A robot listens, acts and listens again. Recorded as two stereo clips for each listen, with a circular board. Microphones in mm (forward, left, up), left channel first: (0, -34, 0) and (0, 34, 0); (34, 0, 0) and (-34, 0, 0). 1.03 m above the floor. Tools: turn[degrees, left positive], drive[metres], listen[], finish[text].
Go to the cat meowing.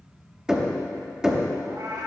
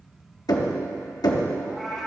Thought: The cat meowing: 90° left.
Action: turn[90]
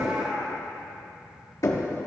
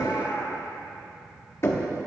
Thought: The cat meowing is now 30° left.
Action: turn[30]
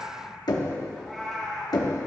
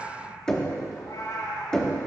Action: drive[1.0]
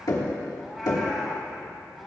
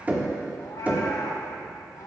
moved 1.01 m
Action: drive[1.0]
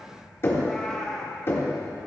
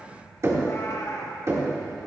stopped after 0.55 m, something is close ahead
Thought: The cat meowing is now 10° right.
Action: turn[-10]
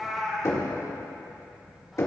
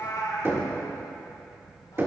Action: finish[Arrived at the cat meowing, straight ahead.]